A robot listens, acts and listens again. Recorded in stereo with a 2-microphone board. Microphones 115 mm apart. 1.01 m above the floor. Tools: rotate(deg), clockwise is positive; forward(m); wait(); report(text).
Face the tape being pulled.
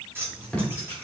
rotate(-30)
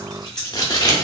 rotate(-140)
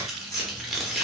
report("Found it: tape being pulled, straight ahead.")